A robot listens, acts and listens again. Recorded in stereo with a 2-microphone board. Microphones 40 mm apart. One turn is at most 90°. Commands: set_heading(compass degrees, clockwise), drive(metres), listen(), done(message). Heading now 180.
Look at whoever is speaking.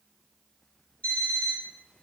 listen()
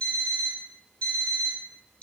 listen()
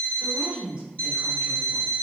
set_heading(205)
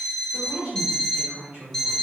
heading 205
set_heading(295)
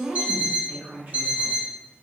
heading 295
set_heading(10)
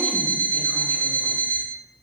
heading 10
listen()
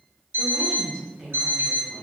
set_heading(30)
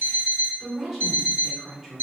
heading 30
done("Facing the woman speaking.")